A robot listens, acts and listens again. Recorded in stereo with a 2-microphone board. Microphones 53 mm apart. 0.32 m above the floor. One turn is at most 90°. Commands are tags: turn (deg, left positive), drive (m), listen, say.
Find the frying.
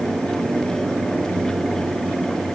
<listen/>
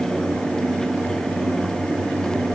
<listen/>
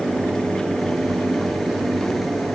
<say>I can't make out frying to turn to.</say>